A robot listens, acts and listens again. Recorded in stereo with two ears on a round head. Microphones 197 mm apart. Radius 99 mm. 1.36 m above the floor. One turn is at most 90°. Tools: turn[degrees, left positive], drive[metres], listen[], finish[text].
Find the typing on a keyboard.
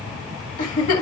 Action: listen[]
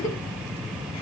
Action: listen[]
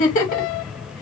Action: finish[I can't make out typing on a keyboard to turn to.]